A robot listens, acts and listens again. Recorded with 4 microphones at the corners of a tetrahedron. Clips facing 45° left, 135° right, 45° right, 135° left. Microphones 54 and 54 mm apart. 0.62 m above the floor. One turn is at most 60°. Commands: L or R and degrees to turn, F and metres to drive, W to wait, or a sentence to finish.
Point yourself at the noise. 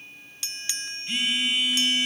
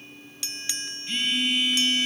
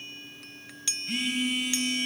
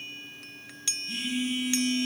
R35
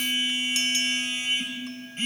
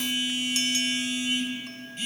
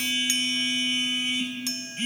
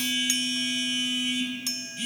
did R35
Facing the phone buzzing, 2 to 4 m away.